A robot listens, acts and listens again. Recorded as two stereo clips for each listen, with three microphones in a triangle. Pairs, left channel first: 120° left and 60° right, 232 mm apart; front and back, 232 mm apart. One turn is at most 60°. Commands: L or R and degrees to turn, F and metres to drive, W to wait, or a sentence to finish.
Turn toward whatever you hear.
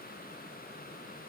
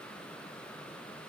W
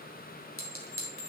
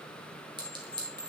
L60
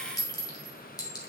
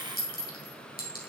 L50
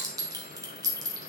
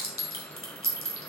L10
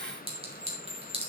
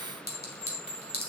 Found it: a clink, straight ahead, 2 to 4 m away.